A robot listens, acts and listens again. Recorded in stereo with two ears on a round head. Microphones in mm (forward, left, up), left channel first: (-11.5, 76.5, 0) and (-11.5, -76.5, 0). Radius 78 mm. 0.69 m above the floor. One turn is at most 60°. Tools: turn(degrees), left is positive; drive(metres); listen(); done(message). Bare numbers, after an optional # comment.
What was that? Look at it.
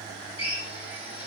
# The drill: about 30° left or 150° left.
turn(30)
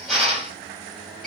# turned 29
done("Facing the drill.")